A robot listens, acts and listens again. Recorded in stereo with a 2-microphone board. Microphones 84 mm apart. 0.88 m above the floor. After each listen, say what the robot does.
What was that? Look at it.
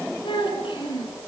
Turn 75° left.
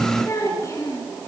Turn 40° left.
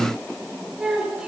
Turn 10° right.
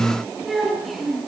Found it: a child speaking, straight ahead.